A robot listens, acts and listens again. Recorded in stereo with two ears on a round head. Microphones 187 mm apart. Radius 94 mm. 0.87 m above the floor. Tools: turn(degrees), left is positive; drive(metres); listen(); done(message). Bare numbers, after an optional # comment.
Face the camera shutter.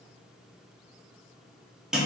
listen()
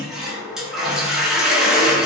listen()
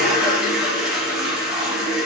done("I can't make out a camera shutter to turn to.")